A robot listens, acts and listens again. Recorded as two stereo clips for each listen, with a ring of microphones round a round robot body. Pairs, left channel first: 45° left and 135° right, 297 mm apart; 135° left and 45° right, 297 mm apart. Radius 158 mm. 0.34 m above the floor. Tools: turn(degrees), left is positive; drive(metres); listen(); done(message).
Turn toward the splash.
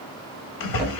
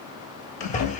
turn(degrees=70)
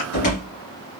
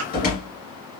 done("Found it: a splash, straight ahead.")